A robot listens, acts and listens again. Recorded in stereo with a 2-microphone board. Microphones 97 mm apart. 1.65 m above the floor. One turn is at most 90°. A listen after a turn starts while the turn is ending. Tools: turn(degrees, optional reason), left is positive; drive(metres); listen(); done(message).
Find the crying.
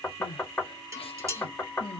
turn(degrees=90)
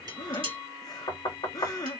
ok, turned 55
turn(degrees=40, reason="So it is at 40° left.")
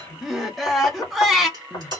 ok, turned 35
done("Facing the crying, 1 to 2 m away.")